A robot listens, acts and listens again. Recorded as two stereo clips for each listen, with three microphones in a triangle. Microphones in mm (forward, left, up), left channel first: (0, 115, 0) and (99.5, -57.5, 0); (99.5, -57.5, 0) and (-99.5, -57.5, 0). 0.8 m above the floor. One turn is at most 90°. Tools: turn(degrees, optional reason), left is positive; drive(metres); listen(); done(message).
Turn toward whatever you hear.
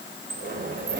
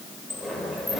turn(degrees=-90, reason="The sliding door: 90° right.")
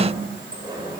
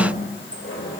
listen()
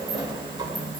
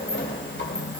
done("Facing the sliding door, 1 to 2 m away.")